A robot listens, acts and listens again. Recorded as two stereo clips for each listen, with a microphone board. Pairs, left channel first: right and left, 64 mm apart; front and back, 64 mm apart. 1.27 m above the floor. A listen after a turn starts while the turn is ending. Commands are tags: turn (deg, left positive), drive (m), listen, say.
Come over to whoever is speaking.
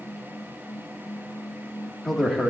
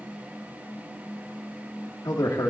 <drive m="1.0"/>
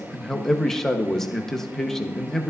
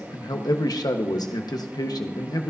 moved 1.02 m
<turn deg="-10"/>
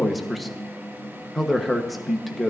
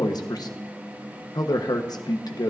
<drive m="1.0"/>
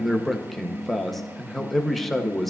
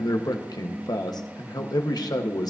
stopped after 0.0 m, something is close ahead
<say>Arrived at the man speaking, straight ahead.</say>